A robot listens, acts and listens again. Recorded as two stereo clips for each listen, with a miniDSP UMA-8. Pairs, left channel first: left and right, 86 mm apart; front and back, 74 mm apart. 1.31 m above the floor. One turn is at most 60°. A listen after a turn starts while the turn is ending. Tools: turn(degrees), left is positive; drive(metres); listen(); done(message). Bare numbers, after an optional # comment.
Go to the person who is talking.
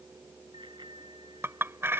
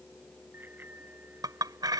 listen()
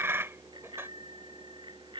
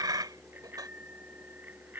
listen()
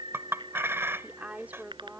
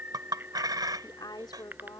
# The woman speaking: 20° right.
turn(-20)
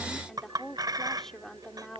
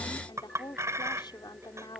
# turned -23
drive(1.0)
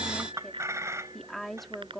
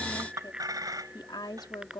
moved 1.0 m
drive(1.0)
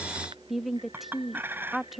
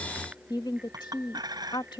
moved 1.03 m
drive(1.0)
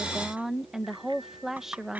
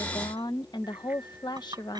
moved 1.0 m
drive(1.0)
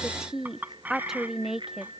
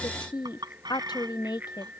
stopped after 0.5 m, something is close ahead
done("Arrived at the woman speaking, straight ahead.")